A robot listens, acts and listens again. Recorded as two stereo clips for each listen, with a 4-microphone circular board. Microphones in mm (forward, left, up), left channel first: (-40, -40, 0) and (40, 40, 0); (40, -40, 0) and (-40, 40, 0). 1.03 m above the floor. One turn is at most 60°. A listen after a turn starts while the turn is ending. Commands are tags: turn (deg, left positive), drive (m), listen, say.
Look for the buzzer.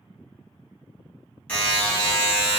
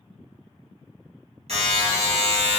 <turn deg="60"/>
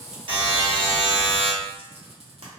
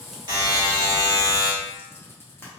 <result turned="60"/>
<turn deg="60"/>
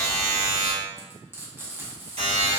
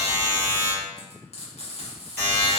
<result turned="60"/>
<turn deg="25"/>
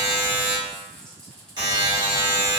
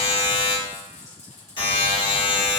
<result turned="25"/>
<say>Found it: a buzzer, straight ahead.</say>